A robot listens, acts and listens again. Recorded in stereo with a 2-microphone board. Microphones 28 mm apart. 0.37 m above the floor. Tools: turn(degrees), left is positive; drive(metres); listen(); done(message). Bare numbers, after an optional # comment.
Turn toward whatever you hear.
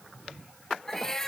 # The cat meowing: about 20° left or 160° left.
turn(20)
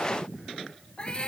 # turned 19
# So it is at 145° left.
turn(145)
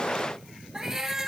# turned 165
# The cat meowing is now 20° right.
turn(-20)
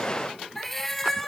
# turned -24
done("Facing the cat meowing, 1 to 2 m away.")